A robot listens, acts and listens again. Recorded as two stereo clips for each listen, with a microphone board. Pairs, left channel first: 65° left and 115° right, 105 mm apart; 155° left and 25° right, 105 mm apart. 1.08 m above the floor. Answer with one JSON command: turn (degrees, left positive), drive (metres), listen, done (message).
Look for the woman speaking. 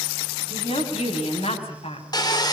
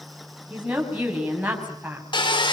{"turn": 55}
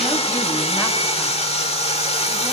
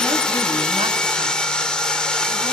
{"listen": true}
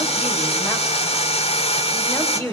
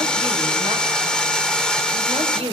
{"done": "Found it: a woman speaking, straight ahead, over 4 m away."}